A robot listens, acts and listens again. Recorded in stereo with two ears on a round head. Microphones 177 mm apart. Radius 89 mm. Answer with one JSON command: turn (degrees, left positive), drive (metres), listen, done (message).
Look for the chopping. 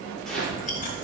{"turn": 30}
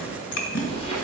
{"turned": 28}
{"listen": true}
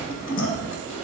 {"listen": true}
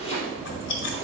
{"turn": 150}
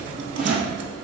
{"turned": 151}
{"listen": true}
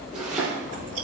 {"done": "Facing the chopping, 2 to 4 m away."}